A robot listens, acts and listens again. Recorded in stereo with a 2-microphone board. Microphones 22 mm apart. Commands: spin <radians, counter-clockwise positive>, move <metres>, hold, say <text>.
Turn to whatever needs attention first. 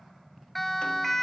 spin 0.52
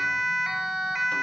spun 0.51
spin -0.35
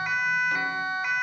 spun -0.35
say Found it: a siren, straight ahead, 2 to 4 m away.